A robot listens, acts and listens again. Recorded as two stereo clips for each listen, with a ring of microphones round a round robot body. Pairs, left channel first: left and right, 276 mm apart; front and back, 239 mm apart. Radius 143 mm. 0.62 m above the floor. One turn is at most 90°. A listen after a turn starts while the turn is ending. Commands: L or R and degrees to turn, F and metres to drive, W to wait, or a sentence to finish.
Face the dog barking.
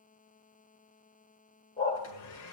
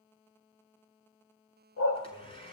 L25
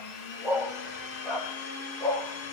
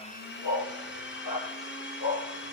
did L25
L10
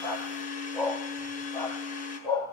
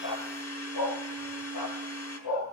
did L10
L10
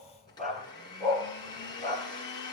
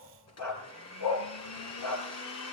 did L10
Found it: a dog barking, straight ahead, 2 to 4 m away.